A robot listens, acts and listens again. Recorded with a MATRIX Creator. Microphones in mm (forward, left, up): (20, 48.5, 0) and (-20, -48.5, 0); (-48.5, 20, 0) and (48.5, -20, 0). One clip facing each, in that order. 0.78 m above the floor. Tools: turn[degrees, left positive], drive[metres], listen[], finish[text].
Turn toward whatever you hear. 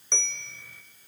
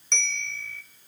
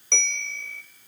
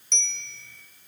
Thought: The bell: 140° left.
Action: turn[140]
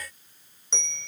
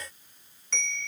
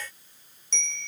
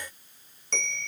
Action: finish[Facing the bell.]